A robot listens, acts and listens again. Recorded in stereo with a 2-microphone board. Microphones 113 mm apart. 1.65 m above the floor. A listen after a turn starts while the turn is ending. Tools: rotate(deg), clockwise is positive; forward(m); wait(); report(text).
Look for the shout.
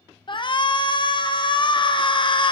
rotate(-45)
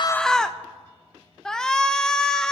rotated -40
report("Found it: a shout, straight ahead, under 1 m away.")